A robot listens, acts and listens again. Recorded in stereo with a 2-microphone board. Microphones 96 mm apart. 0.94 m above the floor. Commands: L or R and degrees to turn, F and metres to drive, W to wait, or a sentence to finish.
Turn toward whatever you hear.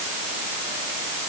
W
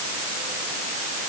W
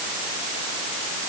I can't make out anything.